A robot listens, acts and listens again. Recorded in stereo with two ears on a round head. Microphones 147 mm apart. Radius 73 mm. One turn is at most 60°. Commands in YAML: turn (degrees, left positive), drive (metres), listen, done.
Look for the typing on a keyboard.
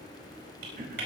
turn: -60
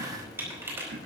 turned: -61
turn: -15
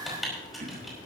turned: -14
done: "Facing the typing on a keyboard."